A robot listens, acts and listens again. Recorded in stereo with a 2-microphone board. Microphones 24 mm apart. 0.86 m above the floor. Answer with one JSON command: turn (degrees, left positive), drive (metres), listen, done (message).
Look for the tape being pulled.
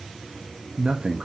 {"listen": true}
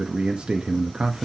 {"listen": true}
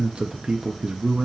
{"done": "I can't make out tape being pulled to turn to."}